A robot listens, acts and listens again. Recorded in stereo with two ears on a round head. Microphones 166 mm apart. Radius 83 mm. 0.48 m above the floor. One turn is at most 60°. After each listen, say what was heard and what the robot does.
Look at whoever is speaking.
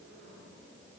Keep listening.
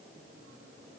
Keep listening.
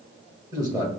The man speaking: about 20° right or 160° right. Turn 20° right.
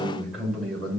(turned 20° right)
Facing the man speaking, 1 to 2 m away.